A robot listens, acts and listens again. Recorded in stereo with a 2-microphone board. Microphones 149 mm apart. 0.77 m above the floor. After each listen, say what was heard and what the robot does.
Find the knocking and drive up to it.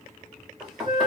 Turn 30° right.
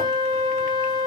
Keep listening.
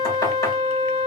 Keep listening.
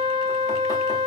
I heard knocking, but can't make it out now. It was about 25° left or 145° right. I did not reach it.